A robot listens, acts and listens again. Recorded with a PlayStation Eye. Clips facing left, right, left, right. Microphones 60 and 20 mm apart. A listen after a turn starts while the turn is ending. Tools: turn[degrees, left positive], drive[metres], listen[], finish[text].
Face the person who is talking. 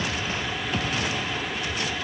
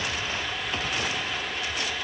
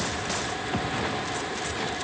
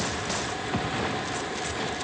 Action: listen[]
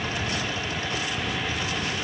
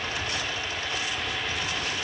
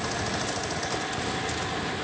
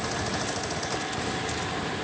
Action: listen[]
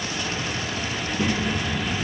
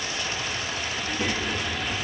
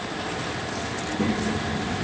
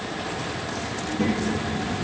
Action: turn[-30]
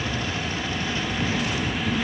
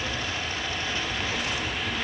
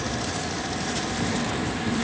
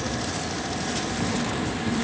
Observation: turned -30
Thought: So it is at 20° left.
Action: turn[20]
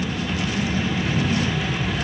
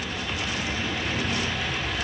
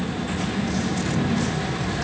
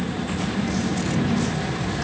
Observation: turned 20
Action: finish[Facing the child speaking.]